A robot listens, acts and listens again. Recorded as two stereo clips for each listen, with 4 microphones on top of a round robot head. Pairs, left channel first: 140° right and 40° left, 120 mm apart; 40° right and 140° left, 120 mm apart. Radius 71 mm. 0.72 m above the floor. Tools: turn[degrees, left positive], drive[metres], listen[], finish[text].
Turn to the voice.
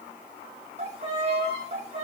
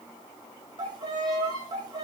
Action: listen[]
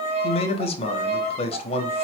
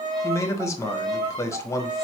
Thought: The man speaking: 105° right.
Action: turn[-105]
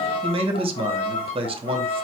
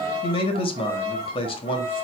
Action: finish[Facing the man speaking.]